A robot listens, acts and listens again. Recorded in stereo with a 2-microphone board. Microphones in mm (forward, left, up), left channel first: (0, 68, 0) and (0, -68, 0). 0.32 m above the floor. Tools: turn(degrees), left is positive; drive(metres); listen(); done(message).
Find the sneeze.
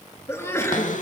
turn(degrees=20)
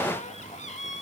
listen()
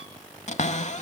done("I heard a sneeze, but can't make it out now. It was about straight ahead or 140° left.")